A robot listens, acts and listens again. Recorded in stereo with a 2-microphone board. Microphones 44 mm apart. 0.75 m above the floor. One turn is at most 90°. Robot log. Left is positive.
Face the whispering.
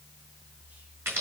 cmd idle
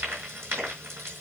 cmd idle
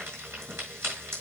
end: I can't make out whispering to turn to.